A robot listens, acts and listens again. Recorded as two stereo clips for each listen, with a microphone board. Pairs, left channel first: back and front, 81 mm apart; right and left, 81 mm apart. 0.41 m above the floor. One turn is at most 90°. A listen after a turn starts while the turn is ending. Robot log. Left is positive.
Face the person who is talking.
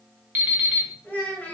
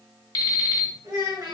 note: The child speaking: 110° left.
cmd yaw +90
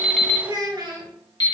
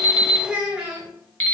note: The child speaking is now 15° left.
cmd yaw +15
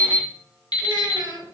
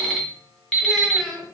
end: Facing the child speaking.